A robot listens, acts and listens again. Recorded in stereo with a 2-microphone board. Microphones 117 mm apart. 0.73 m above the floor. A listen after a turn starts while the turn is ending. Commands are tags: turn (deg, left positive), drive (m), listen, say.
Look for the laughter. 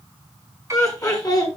<turn deg="35"/>
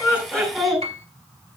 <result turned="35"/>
<say>Facing the laughter, over 4 m away.</say>